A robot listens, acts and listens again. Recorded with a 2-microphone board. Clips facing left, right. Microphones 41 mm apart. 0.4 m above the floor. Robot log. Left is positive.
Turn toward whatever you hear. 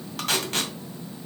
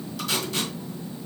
note: The tape being pulled: about 55° left or 125° left.
cmd yaw +55
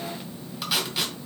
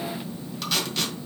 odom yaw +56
note: So it is at 10° left.
cmd yaw +10
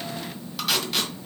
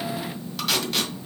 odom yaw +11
end: Facing the tape being pulled.